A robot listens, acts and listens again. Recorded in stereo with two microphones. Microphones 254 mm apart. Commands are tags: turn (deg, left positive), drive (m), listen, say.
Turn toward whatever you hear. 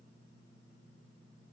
<listen/>
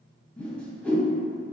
<turn deg="30"/>
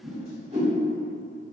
<turn deg="-25"/>
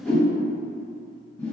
<turn deg="10"/>
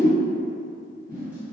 <say>Facing the whoosh.</say>